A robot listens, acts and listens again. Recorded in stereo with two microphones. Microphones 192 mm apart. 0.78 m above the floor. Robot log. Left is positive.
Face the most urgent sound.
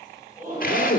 note: The shout: about 45° right or 135° right.
cmd yaw -45
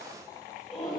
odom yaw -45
end: Facing the shout.